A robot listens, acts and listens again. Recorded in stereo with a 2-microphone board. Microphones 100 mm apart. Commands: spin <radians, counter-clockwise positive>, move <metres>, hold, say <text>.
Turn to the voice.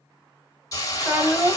spin -0.35
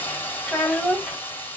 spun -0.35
say Found it: a child speaking, straight ahead, 1 to 2 m away.